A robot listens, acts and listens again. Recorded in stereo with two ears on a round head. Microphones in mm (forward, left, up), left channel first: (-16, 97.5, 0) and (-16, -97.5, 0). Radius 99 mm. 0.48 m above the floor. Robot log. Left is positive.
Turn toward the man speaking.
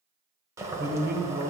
note: The man speaking: about 50° right or 130° right.
cmd yaw -50
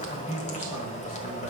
note: So it is at 10° right.
cmd yaw -10
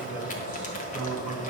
note: The man speaking is now 10° right.
cmd yaw -10
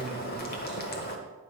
cmd idle
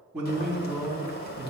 end: Found it: a man speaking, straight ahead, over 4 m away.